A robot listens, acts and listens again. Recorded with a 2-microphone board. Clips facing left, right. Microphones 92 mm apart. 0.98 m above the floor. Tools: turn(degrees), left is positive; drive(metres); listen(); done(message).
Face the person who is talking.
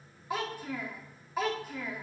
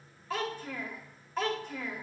turn(degrees=30)
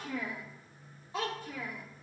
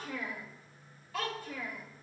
turn(degrees=160)
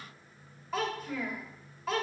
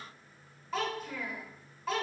done("Facing the child speaking.")